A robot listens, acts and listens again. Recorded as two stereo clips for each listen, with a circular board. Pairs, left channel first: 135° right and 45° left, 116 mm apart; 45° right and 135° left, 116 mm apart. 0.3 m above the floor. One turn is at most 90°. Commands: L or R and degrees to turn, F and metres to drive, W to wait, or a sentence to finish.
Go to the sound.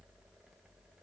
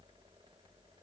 W
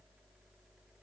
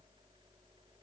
W
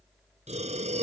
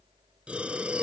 L55
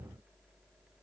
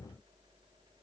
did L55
W
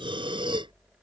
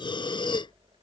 F1.0
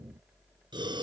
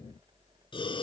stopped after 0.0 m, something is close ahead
Something is in my way. I am facing the breathing but have not reached it.